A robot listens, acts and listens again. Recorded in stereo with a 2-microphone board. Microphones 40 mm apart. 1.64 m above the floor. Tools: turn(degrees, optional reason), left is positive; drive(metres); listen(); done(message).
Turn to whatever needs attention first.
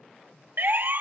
turn(degrees=-55, reason="The siren: about 55° right or 125° right.")
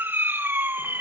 turn(degrees=-70, reason="So it is at 70° right.")
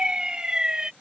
turn(degrees=-25, reason="The siren is now 25° right.")
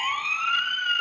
done("Facing the siren.")